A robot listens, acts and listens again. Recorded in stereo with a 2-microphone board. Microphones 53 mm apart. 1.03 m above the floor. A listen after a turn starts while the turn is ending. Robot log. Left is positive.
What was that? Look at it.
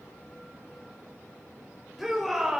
cmd yaw -30
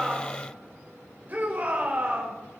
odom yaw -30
note: So it is at 145° right.
cmd yaw -145
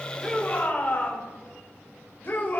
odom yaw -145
note: The shout is now 40° left.
cmd yaw +40
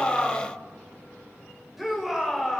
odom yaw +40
end: Facing the shout, over 4 m away.